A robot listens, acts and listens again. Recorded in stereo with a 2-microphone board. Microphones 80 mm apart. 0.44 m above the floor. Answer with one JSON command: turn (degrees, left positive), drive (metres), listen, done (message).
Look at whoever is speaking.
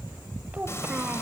{"turn": -15}
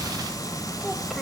{"listen": true}
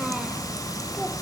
{"listen": true}
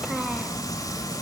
{"done": "I heard a child speaking, but can't make it out now. It was about straight ahead or 150° right."}